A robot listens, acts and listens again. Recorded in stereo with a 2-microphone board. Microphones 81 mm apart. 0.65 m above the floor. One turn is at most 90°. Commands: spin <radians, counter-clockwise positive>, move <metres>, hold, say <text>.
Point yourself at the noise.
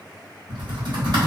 spin -1.13
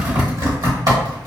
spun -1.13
spin -0.96
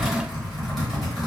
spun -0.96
say Found it: typing on a keyboard, straight ahead, 1 to 2 m away.